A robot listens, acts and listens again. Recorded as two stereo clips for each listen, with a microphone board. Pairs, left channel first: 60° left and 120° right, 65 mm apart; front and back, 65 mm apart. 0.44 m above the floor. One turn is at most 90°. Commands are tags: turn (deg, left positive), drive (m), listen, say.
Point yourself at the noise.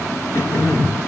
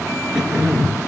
<turn deg="90"/>
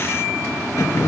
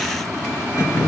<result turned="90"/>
<turn deg="40"/>
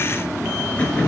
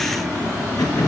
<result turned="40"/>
<say>Found it: throat clearing, straight ahead, 2 to 4 m away.</say>